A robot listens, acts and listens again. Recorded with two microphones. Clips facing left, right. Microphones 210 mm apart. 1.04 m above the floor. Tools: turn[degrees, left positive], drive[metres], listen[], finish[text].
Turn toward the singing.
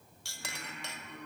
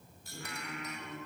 Action: turn[-90]
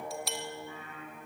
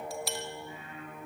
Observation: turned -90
Thought: So it is at 25° right.
Action: turn[-25]
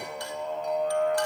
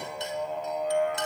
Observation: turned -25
Action: finish[Facing the singing.]